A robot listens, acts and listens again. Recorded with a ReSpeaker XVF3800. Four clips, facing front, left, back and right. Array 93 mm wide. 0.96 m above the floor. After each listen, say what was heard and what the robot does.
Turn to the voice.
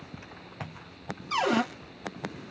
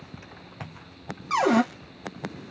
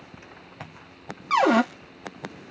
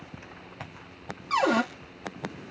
Keep listening.
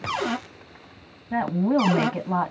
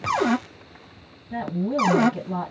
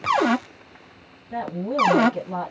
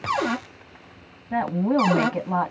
The woman speaking: 55° right. Turn 55° right.
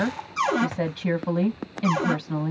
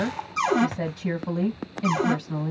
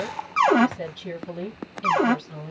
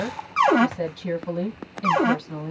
Found it: a woman speaking, straight ahead, 1 to 2 m away.